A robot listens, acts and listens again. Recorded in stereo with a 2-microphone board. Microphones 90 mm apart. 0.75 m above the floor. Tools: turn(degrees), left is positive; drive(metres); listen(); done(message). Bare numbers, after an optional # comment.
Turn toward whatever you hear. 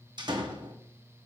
# The door slam: about 50° right or 130° right.
turn(-50)
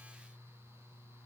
listen()
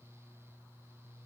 done("I heard a door slam, but can't make it out now. It was about straight ahead or 80° right.")